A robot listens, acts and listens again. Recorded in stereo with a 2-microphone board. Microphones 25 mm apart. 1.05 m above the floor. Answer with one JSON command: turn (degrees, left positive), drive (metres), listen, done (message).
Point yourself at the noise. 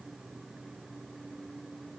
{"listen": true}
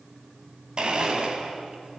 {"turn": -40}
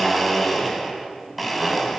{"done": "Found it: a blender, straight ahead."}